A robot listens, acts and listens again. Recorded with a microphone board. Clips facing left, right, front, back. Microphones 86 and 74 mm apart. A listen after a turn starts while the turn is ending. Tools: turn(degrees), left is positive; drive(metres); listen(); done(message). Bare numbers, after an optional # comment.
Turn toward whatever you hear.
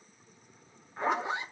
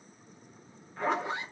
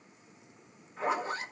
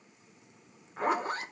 # The zipper: 155° left.
turn(155)
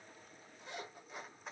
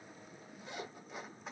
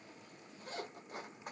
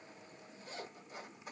done("Found it: a zipper, straight ahead.")